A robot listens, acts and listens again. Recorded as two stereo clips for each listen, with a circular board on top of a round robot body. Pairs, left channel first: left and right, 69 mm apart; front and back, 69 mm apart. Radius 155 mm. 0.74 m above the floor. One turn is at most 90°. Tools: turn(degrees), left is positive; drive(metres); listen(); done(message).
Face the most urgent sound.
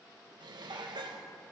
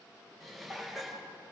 listen()
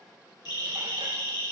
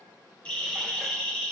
turn(degrees=75)
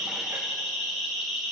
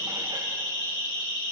done("Facing the siren.")